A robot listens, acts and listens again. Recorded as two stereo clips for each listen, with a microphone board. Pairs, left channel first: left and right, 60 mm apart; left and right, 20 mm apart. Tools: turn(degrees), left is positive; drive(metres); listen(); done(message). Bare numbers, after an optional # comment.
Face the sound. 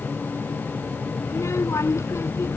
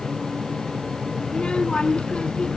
# The child speaking: about 50° left or 130° left.
turn(50)
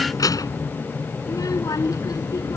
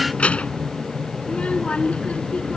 # So it is at 90° left.
turn(90)
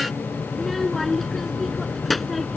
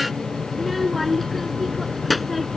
done("Facing the child speaking.")